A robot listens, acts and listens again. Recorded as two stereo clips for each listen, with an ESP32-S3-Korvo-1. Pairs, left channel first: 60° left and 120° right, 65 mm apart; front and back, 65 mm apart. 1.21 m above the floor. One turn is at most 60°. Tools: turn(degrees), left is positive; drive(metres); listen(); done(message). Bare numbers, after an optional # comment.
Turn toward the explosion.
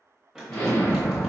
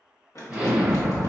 # The explosion: 110° left.
turn(60)
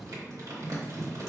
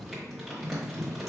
# Nothing new. It was at 50° left.
turn(50)
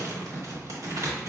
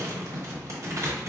done("Facing where the explosion came from. I can't hear it now.")